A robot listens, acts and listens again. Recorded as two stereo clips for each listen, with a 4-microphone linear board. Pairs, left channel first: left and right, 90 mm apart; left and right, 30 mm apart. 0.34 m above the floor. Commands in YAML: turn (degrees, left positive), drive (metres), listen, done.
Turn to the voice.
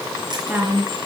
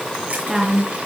turn: -15
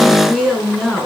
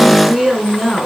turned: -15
done: "Found it: a woman speaking, straight ahead."